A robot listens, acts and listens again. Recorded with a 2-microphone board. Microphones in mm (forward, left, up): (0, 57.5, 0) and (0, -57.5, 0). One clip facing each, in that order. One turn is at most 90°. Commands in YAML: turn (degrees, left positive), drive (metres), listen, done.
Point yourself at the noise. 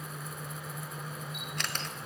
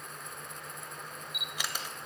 turn: -30
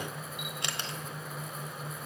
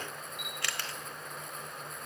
turn: 25
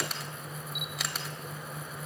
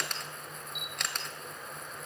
done: "Facing the camera shutter, 1 to 2 m away."